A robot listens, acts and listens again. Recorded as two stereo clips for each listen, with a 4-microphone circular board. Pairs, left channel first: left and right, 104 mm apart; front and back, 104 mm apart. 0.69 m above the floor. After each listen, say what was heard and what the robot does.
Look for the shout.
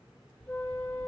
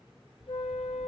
Keep listening.
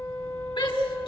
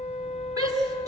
The shout: 125° left. Turn 125° left.
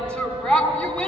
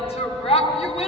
The shout is now 10° left. Turn 10° left.
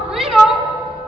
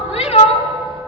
Facing the shout.